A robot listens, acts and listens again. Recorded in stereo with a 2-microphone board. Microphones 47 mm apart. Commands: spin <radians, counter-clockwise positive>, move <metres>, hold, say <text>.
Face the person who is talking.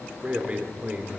spin -0.52
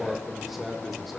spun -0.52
say Facing the man speaking.